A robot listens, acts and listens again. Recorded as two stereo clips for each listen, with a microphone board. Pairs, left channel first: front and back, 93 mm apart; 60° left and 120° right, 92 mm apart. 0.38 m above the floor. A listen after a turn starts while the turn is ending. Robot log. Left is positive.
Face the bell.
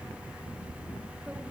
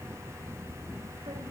cmd idle
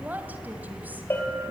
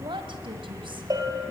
note: The bell: 70° right.
cmd yaw -70
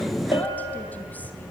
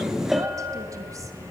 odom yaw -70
note: The bell is now 30° right.
cmd yaw -30
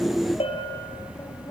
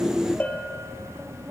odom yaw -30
note: The bell is now 15° right.
cmd yaw -15
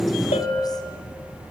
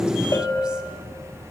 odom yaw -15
end: Facing the bell.